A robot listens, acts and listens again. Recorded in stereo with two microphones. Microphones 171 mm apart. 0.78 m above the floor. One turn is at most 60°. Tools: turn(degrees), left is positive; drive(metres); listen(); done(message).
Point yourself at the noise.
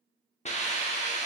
turn(degrees=40)
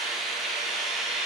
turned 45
done("Facing the hiss.")